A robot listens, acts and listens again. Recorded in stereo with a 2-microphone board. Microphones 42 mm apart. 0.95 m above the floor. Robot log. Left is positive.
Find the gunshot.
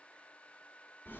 cmd idle
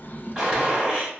note: The gunshot: about 20° right or 160° right.
cmd yaw -20
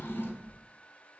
cmd idle
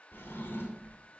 end: I heard a gunshot, but can't make it out now. It was about straight ahead or 140° right.